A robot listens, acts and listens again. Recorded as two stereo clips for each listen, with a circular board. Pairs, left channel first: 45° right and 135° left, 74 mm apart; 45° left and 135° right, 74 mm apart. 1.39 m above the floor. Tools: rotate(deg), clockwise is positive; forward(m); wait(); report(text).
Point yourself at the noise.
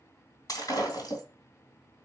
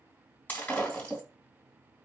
rotate(25)
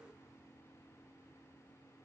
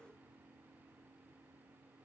report("I heard breaking glass from this way, but can't make it out now.")